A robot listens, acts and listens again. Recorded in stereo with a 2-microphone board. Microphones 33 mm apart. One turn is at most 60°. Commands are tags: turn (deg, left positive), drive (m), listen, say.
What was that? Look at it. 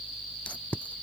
<turn deg="50"/>
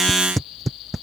<say>Found it: tape being pulled, straight ahead.</say>